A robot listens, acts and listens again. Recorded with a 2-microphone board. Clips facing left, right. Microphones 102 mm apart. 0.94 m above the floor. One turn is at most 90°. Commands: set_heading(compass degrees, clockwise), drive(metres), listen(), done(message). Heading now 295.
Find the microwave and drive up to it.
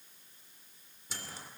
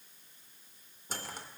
set_heading(345)
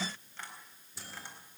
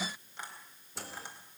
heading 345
set_heading(65)
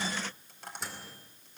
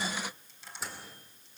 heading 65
drive(1.0)
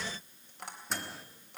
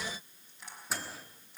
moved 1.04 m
drive(1.0)
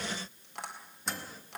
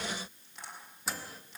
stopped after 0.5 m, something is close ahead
done("I am next to the microwave.")